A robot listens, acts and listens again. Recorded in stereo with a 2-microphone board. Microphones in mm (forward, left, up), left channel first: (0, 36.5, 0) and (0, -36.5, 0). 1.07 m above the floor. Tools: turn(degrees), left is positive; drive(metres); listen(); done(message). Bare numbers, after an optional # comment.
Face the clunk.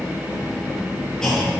turn(30)
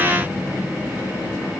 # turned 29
listen()
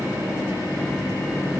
done("I heard a clunk, but can't make it out now. It was about 20° right or 140° left.")